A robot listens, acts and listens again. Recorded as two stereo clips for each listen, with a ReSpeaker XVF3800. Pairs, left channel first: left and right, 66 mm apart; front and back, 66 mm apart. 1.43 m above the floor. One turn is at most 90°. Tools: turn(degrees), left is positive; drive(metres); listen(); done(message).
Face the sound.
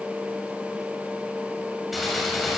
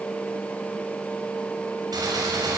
turn(degrees=90)
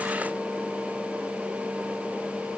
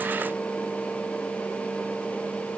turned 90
turn(degrees=90)
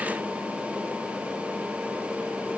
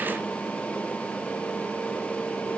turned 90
done("Facing where the gunshot came from. I can't hear it now.")